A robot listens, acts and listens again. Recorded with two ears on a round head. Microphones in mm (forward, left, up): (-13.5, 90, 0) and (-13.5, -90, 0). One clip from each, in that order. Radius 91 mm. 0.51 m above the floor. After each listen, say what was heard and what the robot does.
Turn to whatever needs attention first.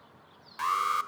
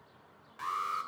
The alarm: about 35° left or 145° left. Turn 35° left.
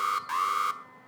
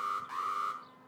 So it is at 105° left. Turn 105° left.
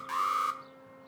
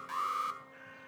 The alarm is now 10° left. Turn 10° left.
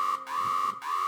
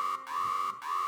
Found it: an alarm, straight ahead, 1 to 2 m away.